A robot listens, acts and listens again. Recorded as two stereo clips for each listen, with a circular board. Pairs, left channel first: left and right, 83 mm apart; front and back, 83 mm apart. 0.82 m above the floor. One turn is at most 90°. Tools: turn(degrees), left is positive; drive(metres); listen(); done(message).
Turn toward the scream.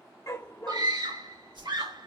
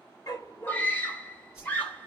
turn(degrees=-70)
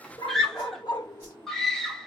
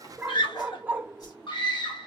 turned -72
done("Facing the scream.")